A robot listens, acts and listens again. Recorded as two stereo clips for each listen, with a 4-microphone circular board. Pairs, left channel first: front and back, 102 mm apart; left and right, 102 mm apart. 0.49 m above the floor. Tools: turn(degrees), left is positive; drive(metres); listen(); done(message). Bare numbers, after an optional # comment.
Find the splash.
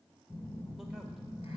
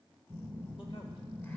listen()
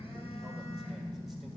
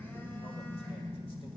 listen()
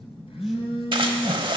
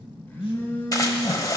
# The splash: 145° left.
turn(145)
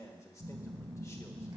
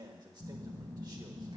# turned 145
done("Facing where the splash came from. I can't hear it now.")